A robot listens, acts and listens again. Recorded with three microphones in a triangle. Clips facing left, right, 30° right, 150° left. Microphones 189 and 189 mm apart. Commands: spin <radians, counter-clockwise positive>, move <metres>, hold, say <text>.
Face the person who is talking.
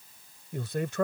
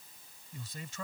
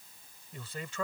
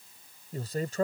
spin 1.83
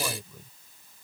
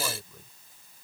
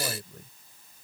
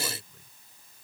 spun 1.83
say Found it: a man speaking, straight ahead.